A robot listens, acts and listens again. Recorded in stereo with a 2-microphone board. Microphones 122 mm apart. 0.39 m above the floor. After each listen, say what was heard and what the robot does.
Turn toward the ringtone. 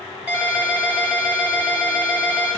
Turn 30° right.
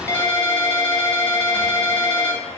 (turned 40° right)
So it is at 25° left. Turn 25° left.
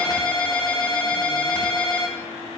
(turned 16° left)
The ringtone is now 10° left. Turn 10° left.
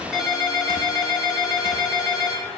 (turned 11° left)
Found it: a ringtone, straight ahead.